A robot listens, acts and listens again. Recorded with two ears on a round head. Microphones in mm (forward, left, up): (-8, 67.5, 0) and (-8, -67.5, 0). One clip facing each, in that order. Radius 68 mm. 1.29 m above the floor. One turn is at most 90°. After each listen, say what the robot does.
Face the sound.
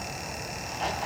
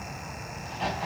Turn 30° right.
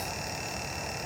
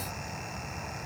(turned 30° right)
Keep listening.
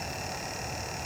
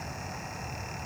I heard a crack, but can't make it out now. It was about 25° left or 145° right.